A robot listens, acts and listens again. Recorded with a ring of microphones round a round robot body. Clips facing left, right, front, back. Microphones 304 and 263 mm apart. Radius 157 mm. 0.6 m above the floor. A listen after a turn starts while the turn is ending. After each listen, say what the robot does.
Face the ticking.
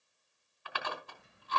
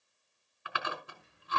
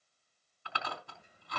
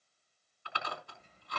Turn 80° left.
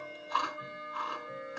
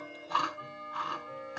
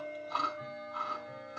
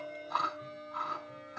Turn 20° left.
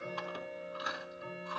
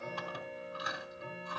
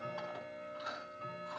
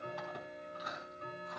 Found it: ticking, straight ahead.